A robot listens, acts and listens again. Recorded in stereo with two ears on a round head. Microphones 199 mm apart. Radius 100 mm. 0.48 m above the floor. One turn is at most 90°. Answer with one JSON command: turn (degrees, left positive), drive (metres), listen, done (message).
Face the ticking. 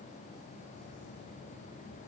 {"listen": true}
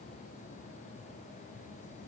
{"listen": true}
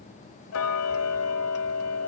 {"turn": 90}
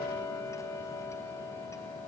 {"turn": 15}
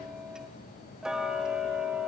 {"done": "Found it: ticking, straight ahead, 1 to 2 m away."}